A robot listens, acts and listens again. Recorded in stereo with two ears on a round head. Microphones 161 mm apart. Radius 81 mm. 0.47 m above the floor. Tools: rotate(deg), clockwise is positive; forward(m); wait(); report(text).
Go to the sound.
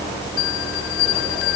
rotate(-70)
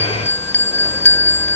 rotate(-15)
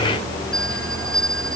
forward(1.0)
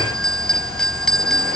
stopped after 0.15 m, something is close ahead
report("Something is in my way. I am facing the bell but have not reached it.")